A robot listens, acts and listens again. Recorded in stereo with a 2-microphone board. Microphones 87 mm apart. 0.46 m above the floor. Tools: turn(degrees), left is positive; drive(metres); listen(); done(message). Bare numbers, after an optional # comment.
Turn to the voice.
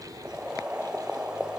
listen()
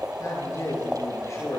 # The man speaking: about 40° left or 140° left.
turn(40)
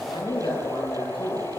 # So it is at 100° left.
turn(100)
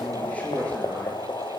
# The man speaking is now 15° left.
turn(15)
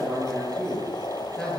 done("Found it: a man speaking, straight ahead, over 4 m away.")